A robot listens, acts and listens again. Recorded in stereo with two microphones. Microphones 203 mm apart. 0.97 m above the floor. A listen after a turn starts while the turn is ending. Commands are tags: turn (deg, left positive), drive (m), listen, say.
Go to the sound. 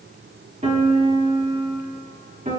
<turn deg="-35"/>
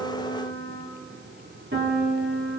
<turn deg="-105"/>
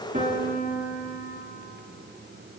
<turn deg="-10"/>
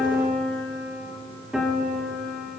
<drive m="1.0"/>
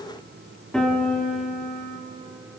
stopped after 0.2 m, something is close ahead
<say>Something is in my way. I am facing the piano but have not reached it.</say>